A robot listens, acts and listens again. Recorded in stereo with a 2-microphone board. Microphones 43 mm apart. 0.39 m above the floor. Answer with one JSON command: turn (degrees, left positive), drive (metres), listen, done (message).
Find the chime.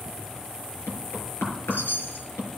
{"turn": 55}
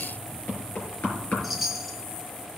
{"done": "Found it: a chime, straight ahead, 1 to 2 m away."}